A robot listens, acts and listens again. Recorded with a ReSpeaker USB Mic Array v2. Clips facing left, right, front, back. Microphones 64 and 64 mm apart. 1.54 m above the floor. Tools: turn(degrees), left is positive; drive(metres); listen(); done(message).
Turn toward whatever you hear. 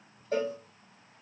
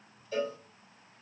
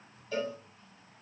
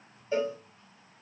turn(degrees=115)
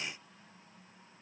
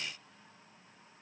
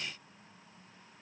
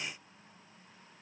listen()
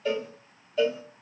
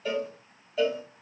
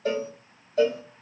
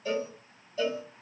done("Found it: a cowbell, straight ahead.")